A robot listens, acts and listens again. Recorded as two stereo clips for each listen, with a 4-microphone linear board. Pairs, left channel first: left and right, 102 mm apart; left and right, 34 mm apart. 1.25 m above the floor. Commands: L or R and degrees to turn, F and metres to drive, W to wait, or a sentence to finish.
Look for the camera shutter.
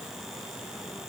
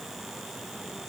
W
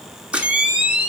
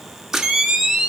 R30
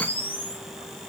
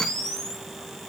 L20
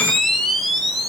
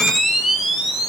Facing the camera shutter, 1 to 2 m away.